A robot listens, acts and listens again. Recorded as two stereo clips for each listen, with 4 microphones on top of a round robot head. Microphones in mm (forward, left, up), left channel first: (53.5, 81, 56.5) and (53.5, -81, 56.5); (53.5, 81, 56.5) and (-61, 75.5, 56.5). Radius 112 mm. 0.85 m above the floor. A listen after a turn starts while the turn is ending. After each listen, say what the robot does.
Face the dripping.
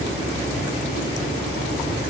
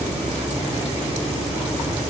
Keep listening.
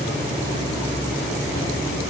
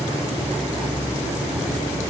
Keep listening.
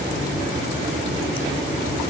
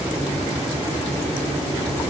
I can't make out dripping to turn to.